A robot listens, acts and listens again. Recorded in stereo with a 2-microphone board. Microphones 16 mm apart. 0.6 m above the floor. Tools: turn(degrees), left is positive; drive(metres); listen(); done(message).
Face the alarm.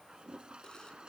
listen()
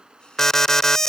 turn(degrees=30)
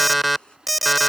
done("Facing the alarm.")